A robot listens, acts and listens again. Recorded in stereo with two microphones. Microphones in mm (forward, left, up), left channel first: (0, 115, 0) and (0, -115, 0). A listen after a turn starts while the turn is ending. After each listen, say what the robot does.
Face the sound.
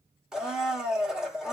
Turn 30° right.
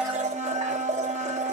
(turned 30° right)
Turn 145° right.
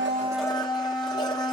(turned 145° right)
Turn 20° left.
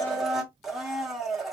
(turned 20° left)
Facing the blender, under 1 m away.